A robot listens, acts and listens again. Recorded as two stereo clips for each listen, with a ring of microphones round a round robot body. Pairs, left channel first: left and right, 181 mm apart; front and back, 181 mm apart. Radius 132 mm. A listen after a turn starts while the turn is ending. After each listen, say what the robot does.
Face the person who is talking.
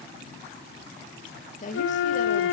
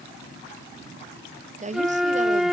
Turn 135° left.
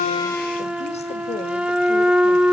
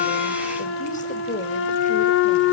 Keep listening.
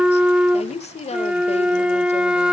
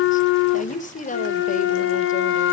Turn 40° left.
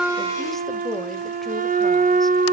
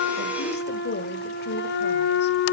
Keep listening.
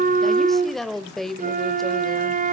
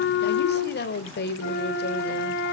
Facing the woman speaking.